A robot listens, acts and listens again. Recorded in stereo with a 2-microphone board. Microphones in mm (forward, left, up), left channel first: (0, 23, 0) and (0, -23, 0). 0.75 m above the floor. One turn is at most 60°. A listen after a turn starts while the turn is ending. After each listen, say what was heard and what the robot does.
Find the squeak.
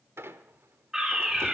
The squeak: about 75° right or 105° right. Turn 60° right.
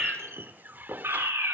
So it is at 45° right. Turn 45° right.
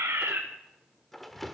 Facing the squeak.